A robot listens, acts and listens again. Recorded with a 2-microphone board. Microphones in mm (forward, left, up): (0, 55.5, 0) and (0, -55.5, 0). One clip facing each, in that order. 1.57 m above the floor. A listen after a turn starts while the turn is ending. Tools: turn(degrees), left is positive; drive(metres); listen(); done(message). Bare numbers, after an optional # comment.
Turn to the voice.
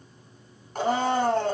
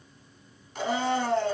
listen()
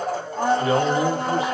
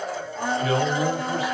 # The man speaking: about 30° left or 150° left.
turn(30)
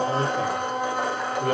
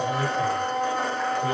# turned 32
# So it is at 120° left.
turn(120)
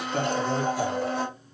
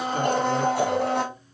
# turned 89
# Nothing new. It was at 30° left.
turn(30)
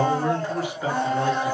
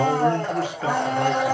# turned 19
# The man speaking is now 15° left.
turn(15)
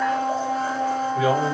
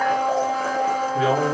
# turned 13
done("Found it: a man speaking, straight ahead, 1 to 2 m away.")